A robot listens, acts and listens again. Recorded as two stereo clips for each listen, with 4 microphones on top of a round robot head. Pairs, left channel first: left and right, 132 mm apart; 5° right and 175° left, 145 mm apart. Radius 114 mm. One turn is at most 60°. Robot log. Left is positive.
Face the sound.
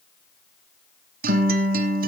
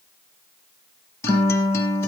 note: The guitar: 85° right.
cmd yaw -60
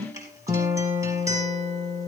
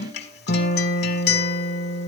note: The guitar is now 15° right.
cmd yaw -15
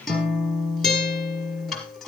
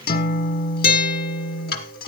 end: Facing the guitar, 1 to 2 m away.